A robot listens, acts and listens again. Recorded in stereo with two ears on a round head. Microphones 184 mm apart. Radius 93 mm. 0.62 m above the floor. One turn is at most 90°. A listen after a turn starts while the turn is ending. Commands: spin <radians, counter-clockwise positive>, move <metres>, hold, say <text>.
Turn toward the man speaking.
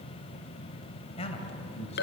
spin 0.52
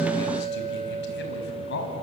spin 1.57
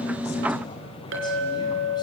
spin 0.44
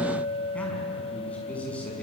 say Found it: a man speaking, straight ahead.